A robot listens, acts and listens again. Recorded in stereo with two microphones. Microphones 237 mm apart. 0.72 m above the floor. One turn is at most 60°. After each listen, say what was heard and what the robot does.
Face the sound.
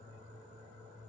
Keep listening.
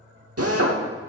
The drill: about 70° right or 110° right. Turn 60° right.
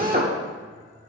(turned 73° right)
So it is at 35° right. Turn 35° right.
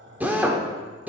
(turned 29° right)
Facing the drill, 1 to 2 m away.